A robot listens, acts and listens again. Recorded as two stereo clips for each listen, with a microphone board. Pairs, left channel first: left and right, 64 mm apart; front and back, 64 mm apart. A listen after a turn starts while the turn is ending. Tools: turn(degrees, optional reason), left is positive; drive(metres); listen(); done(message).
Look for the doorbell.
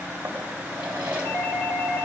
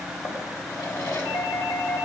turn(degrees=20, reason="The doorbell: 20° left.")
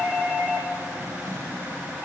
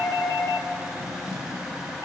turn(degrees=-10, reason="The doorbell is now 10° right.")
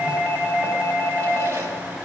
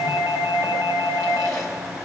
done("Found it: a doorbell, straight ahead, 2 to 4 m away.")